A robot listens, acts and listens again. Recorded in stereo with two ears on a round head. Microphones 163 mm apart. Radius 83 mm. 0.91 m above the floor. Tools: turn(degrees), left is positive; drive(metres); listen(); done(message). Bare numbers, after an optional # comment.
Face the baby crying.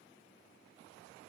listen()
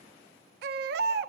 # The baby crying: about 55° right or 125° right.
turn(-55)
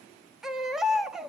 done("Facing the baby crying.")